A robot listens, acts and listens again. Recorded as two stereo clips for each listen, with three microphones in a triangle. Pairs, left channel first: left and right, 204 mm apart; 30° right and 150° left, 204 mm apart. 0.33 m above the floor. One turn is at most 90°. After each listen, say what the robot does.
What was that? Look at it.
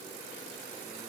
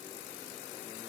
Keep listening.
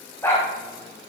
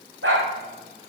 Turn 90° left.
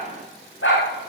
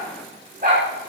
Turn 90° left.
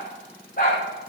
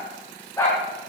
Turn 45° left.
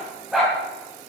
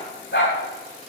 Found it: a dog barking, straight ahead, over 4 m away.